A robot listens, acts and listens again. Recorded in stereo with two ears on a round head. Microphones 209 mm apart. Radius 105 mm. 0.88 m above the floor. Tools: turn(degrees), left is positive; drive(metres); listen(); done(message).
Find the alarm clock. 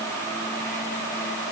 listen()
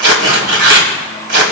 listen()
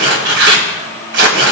done("I can't make out an alarm clock, only tearing paper.")